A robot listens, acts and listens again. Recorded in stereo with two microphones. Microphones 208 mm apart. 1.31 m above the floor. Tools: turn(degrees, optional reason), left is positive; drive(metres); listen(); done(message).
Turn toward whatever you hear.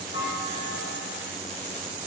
turn(degrees=90)
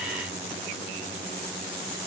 done("Facing where the clunk came from. I can't hear it now.")